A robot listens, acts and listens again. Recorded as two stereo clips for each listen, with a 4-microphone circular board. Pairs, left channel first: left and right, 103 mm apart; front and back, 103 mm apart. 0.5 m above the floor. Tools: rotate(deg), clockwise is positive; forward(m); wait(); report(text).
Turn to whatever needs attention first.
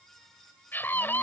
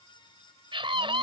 rotate(-160)
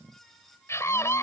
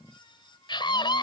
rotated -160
rotate(-30)
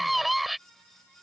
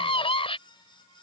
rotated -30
report("Found it: a scream, straight ahead.")